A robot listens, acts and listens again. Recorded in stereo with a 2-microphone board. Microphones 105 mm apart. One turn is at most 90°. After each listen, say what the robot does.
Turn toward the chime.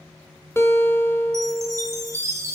Turn 25° right.
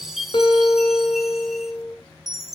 Facing the chime, 2 to 4 m away.